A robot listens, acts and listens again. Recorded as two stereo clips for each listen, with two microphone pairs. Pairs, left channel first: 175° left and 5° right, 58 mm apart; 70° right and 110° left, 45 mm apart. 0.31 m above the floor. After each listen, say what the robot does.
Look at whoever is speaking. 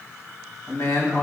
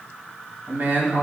Turn 145° left.
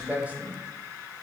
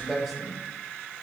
Turn 25° left.
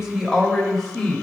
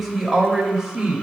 Turn 110° left.
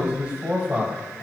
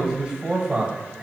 Turn 55° left.
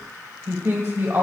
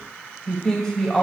Found it: a man speaking, straight ahead, 1 to 2 m away.